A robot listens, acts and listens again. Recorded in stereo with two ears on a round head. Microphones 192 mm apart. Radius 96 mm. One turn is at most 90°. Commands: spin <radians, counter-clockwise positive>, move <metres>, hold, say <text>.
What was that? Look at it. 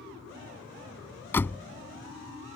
spin 0.52
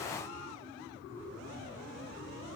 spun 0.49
hold
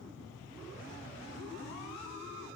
say I heard a door slam, but can't make it out now. It was about 20° right or 140° left.